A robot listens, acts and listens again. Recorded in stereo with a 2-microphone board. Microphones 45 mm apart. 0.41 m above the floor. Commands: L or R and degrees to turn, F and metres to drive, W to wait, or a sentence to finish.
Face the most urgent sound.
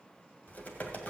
W
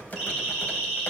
R30
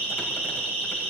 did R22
L15
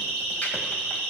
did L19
Facing the siren.